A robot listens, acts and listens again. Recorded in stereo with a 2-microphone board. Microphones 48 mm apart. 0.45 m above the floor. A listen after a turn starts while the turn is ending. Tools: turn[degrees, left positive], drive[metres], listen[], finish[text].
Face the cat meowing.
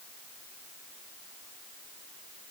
Action: listen[]
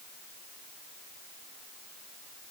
Action: listen[]
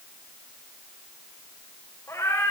Action: turn[90]
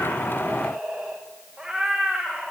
Action: finish[Found it: a cat meowing, straight ahead, over 4 m away.]